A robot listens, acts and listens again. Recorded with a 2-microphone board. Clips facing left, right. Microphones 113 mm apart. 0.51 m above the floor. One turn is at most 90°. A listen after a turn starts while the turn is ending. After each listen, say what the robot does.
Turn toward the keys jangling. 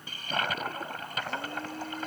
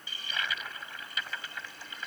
Keep listening.
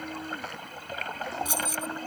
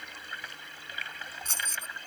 Turn 30° left.
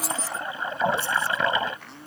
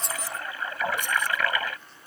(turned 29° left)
Turn 15° right.
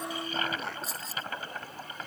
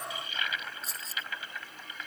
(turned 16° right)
Found it: keys jangling, straight ahead.